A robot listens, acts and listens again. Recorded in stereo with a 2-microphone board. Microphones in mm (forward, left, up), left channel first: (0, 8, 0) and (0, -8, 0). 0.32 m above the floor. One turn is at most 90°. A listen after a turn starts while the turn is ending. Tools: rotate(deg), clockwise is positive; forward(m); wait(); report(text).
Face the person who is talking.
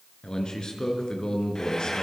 rotate(-60)
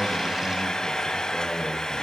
wait()
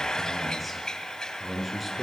report("Found it: a man speaking, straight ahead.")